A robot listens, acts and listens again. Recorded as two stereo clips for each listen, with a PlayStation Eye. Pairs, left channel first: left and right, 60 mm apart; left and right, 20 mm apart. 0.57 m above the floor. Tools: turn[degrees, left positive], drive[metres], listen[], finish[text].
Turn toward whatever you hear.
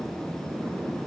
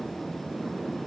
Action: listen[]
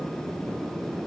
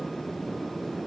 Action: listen[]
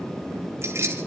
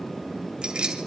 Thought: The keys jangling: about 50° right or 130° right.
Action: turn[-50]
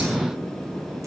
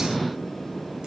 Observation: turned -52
Action: listen[]
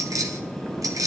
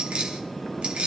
Thought: So it is at 75° right.
Action: turn[-75]
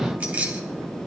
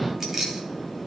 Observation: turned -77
Thought: The keys jangling is now 25° right.
Action: turn[-25]
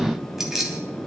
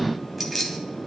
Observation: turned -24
Action: finish[Facing the keys jangling, 2 to 4 m away.]